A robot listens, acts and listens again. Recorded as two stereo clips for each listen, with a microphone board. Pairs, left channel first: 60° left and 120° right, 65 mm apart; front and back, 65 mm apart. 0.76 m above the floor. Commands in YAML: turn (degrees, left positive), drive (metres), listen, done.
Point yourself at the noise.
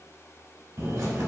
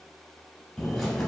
turn: -85
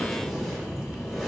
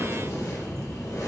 turn: -30
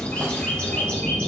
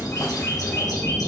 turn: -10
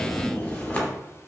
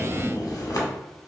done: "Found it: a bird, straight ahead."